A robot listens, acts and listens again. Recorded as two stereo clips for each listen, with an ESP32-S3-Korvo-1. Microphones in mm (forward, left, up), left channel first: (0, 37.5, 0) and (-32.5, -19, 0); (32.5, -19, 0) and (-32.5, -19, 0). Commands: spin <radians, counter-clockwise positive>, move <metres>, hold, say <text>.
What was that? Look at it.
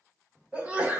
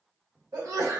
spin 3.05
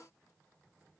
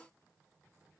say Facing where the sneeze came from. I can't hear it now.